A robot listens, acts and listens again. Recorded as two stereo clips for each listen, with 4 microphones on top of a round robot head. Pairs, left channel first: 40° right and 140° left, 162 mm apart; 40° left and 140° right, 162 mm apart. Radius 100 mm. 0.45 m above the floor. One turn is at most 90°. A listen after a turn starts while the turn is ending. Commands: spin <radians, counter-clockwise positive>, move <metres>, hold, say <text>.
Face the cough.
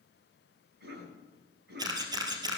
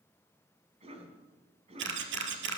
spin 1.57
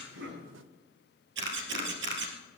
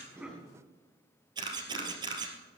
spin 1.31
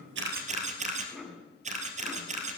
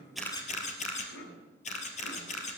spin 0.87
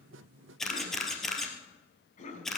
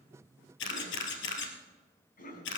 say Found it: a cough, straight ahead.